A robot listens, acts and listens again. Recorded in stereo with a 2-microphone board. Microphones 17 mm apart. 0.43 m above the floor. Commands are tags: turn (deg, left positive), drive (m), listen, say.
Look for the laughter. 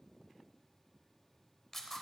<listen/>
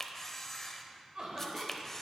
<turn deg="-50"/>
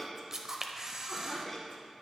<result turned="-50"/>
<turn deg="20"/>
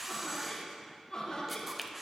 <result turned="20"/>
<turn deg="35"/>
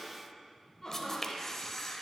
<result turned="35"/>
<turn deg="15"/>
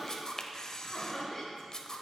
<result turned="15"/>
<say>Found it: laughter, straight ahead, 1 to 2 m away.</say>